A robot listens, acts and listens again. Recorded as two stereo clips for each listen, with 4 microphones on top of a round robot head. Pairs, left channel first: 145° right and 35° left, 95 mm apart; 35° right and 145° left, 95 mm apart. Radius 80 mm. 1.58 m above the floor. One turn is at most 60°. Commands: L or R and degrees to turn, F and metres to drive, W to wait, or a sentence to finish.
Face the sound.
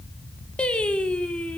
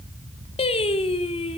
R60
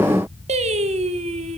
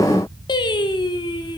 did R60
L15
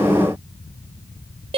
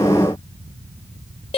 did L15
Facing the singing.